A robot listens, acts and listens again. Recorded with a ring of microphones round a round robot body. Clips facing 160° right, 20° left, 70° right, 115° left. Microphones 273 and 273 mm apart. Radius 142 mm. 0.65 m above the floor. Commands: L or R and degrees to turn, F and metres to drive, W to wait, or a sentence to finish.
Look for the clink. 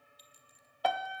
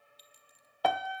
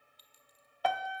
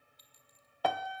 R10
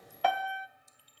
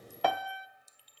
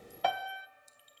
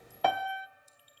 Found it: a clink, straight ahead, 2 to 4 m away.